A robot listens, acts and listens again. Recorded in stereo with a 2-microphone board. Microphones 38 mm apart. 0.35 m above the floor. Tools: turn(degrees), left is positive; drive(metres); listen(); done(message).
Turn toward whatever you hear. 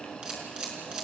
turn(degrees=-25)
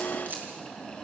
listen()
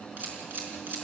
turn(degrees=-125)
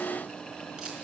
listen()
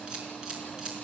turn(degrees=-20)
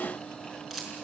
turn(degrees=-10)
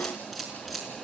done("Found it: a camera shutter, straight ahead.")